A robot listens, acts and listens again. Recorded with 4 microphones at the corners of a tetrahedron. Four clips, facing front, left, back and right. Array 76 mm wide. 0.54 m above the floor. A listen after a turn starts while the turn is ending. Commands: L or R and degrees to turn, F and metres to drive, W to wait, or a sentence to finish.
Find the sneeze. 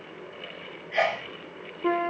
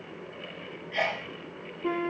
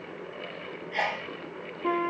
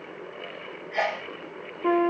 R10
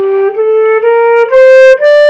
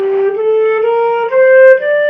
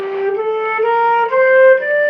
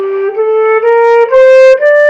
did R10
Facing where the sneeze came from. I can't hear it now.